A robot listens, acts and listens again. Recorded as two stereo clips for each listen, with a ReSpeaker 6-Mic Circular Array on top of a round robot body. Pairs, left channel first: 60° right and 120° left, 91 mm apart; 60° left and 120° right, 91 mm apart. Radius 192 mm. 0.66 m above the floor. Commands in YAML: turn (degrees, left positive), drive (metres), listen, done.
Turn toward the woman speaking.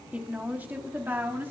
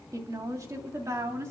turn: -175
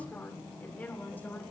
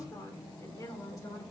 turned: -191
turn: 10
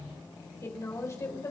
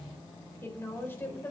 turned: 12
done: "Facing the woman speaking, over 4 m away."